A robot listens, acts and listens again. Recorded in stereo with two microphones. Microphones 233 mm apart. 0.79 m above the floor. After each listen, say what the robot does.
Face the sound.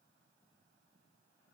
Keep listening.
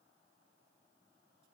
Keep listening.
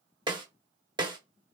Turn 20° right.
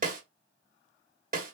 Turn 145° right.
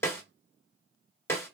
Turn 10° left.
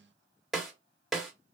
Facing the snare drum, under 1 m away.